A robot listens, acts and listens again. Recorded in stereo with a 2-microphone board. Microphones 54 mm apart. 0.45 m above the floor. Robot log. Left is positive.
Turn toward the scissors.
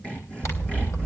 note: The scissors: about 65° left or 115° left.
cmd yaw +65
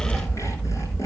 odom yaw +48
note: So it is at 35° left.
cmd yaw +35
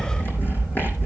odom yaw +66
note: The scissors is now 30° right.
cmd yaw -30
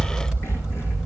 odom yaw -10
note: The scissors is now 20° right.
cmd yaw -20
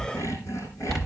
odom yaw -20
end: Facing the scissors, 2 to 4 m away.